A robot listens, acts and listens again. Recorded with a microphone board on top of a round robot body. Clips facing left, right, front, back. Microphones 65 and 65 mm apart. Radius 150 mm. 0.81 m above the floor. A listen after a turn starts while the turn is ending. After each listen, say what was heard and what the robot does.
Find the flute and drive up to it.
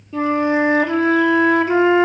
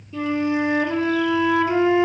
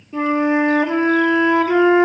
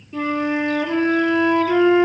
The flute: 55° left. Turn 55° left.
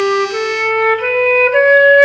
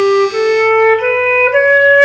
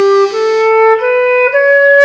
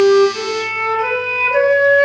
The flute is now 10° right. Turn 10° right.
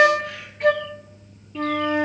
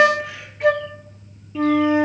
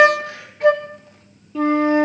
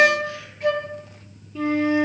Drive 1.0 m forward.
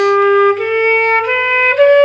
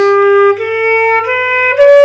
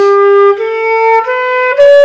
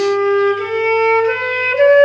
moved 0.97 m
The flute is now 10° right. Turn 10° right.
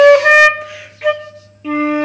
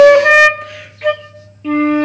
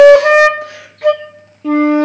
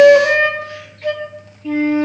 Drive 1.0 m forward.
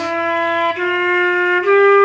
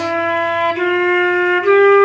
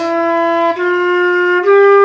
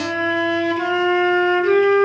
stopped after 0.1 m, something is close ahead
I am next to the flute.